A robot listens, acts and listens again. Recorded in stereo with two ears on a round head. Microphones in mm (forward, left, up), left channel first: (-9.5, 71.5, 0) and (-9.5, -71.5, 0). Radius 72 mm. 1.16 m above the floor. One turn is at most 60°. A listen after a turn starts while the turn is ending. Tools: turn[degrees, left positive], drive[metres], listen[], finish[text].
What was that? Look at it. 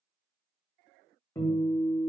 Thought: The guitar: about 15° left or 165° left.
Action: turn[15]
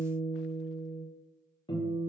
Thought: So it is at 150° left.
Action: turn[60]
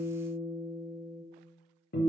Thought: The guitar is now 115° left.
Action: turn[60]
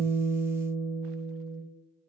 Thought: The guitar is now 50° left.
Action: turn[50]
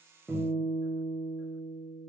Thought: The guitar is now 30° right.
Action: turn[-30]
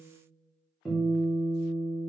Action: finish[Facing the guitar.]